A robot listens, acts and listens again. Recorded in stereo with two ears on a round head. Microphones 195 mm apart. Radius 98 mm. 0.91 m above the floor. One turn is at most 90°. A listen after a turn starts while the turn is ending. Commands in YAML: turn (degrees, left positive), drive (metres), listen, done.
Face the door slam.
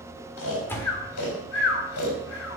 turn: 30
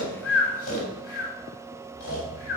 listen: true
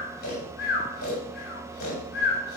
done: "I heard a door slam, but can't make it out now. It was about 20° right or 140° left."